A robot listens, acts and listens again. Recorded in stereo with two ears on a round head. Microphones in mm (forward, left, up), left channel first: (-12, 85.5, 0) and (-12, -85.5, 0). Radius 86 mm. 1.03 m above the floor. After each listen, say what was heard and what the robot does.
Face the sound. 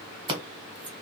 The scissors: about 25° right or 155° right. Turn 25° right.
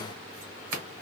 So it is at 125° right. Turn 125° right.
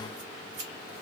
Keep listening.
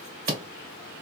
The scissors is now 40° right. Turn 40° right.
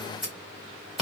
Found it: scissors, straight ahead.